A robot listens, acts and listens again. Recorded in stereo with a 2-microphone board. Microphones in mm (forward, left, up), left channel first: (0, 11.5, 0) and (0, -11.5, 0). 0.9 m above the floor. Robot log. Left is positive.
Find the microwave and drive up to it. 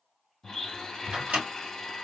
note: The microwave: about 65° right or 115° right.
cmd yaw -65
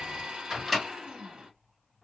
cmd fwd 1.0
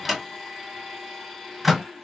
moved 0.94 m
cmd fwd 1.0
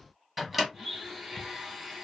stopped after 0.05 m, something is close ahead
end: I am next to the microwave.